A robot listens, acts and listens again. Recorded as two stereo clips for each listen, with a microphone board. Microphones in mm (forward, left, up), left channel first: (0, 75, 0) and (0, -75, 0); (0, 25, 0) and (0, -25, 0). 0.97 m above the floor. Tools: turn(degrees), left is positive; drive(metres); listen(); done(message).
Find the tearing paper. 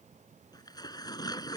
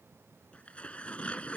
turn(degrees=25)
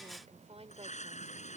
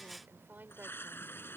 turn(degrees=130)
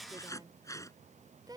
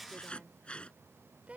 turn(degrees=20)
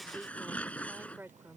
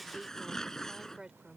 turn(degrees=10)
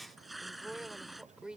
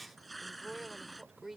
done("Found it: tearing paper, straight ahead.")